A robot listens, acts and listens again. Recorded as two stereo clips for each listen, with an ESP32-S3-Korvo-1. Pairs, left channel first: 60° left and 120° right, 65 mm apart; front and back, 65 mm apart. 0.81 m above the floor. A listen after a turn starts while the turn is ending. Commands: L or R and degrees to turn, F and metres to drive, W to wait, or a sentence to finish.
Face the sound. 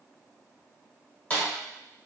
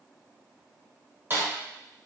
L130
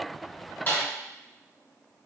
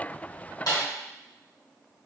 Found it: a snare drum, straight ahead.